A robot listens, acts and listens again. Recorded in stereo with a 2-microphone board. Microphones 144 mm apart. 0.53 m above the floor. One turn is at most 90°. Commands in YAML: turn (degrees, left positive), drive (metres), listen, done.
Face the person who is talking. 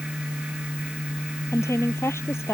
turn: 20
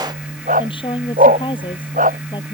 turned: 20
turn: 35
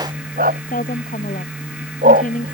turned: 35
turn: 90
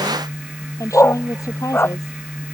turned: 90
turn: 20
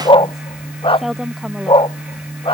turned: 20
done: "Found it: a woman speaking, straight ahead."